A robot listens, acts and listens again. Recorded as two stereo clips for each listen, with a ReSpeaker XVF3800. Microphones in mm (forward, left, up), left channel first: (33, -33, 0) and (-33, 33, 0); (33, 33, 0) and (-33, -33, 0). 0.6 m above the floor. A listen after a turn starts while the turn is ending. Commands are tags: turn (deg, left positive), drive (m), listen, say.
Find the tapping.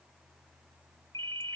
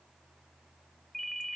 <listen/>
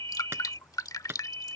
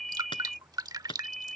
<turn deg="70"/>
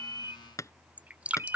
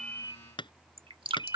<turn deg="15"/>
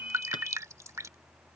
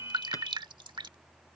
<listen/>
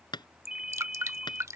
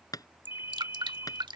<say>Facing the tapping.</say>